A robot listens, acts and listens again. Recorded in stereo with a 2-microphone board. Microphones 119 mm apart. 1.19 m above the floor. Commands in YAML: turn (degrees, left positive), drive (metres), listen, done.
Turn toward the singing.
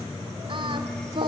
turn: -50
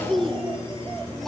done: "Facing the singing."